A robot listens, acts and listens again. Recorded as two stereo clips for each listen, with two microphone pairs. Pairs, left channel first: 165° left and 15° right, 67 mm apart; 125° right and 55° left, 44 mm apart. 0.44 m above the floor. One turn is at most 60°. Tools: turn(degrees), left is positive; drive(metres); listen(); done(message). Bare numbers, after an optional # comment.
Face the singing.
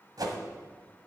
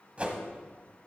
listen()
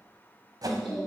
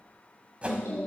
# The singing: 115° right.
turn(-60)
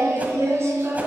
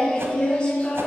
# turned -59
# The singing is now 65° right.
turn(-60)
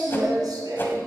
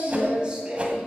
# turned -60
# The singing is now 15° right.
turn(-15)
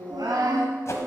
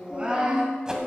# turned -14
# The singing is now 15° right.
turn(-15)
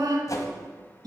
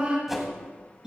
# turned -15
# The singing is now 15° right.
turn(-15)
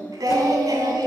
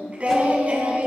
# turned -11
done("Facing the singing.")